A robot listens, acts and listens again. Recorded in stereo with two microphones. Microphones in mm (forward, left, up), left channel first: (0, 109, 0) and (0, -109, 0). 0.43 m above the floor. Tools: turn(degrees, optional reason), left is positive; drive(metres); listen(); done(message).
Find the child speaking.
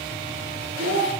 turn(degrees=-90)
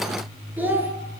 turn(degrees=-10, reason="So it is at 10° right.")
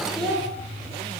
done("Found it: a child speaking, straight ahead, over 4 m away.")